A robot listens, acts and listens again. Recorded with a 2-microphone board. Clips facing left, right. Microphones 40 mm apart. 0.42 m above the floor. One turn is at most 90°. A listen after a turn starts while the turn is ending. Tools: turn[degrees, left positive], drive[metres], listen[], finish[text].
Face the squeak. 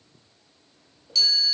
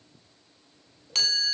Thought: The squeak: about 25° left or 155° left.
Action: turn[25]
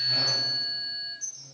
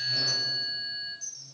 Thought: So it is at 130° left.
Action: turn[90]
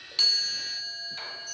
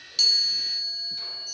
Thought: Nothing new. It was at 40° left.
Action: turn[40]
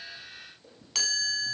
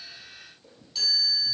Action: listen[]
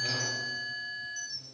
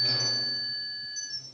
Action: finish[Facing the squeak.]